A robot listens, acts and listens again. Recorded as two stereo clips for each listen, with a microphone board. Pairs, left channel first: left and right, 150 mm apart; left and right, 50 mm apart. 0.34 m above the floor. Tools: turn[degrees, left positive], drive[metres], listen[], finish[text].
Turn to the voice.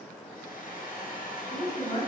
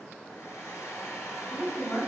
Thought: The woman speaking: about 50° left or 130° left.
Action: turn[50]
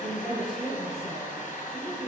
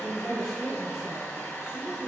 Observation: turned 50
Action: finish[Found it: a woman speaking, straight ahead.]